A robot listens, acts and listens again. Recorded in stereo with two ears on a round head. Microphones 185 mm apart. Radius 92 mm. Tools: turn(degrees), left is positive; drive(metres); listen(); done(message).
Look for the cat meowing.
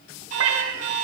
turn(degrees=-70)
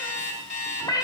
turn(degrees=15)
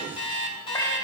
turn(degrees=15)
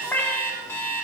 turn(degrees=10)
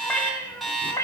turn(degrees=15)
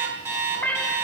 done("Found it: a cat meowing, straight ahead.")